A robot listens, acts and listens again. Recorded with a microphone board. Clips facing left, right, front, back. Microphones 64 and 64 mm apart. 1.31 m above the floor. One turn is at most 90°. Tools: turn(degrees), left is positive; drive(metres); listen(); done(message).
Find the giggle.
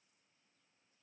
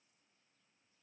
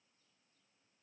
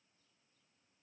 listen()
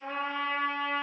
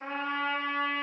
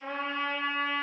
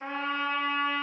listen()
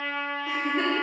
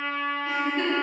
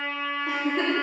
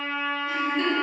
turn(degrees=15)
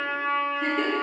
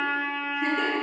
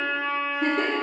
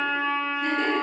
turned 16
done("Facing the giggle, 1 to 2 m away.")